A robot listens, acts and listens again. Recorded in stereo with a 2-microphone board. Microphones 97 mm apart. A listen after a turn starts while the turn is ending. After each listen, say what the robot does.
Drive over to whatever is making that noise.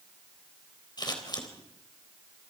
Turn 50° left.
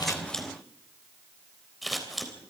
Drive 1.0 m forward.
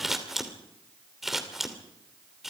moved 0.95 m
Drive 1.0 m forward.
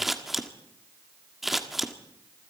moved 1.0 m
Drive 1.0 m forward.
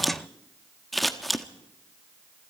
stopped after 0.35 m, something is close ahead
I am next to the scissors.